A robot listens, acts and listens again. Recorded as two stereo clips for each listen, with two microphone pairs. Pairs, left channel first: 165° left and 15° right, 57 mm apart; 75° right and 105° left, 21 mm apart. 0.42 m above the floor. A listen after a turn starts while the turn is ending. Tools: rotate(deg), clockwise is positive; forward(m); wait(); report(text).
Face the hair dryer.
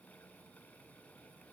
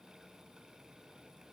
wait()
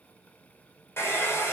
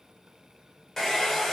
rotate(150)
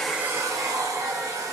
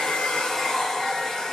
rotate(25)
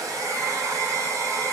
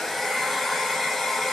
report("Found it: a hair dryer, straight ahead.")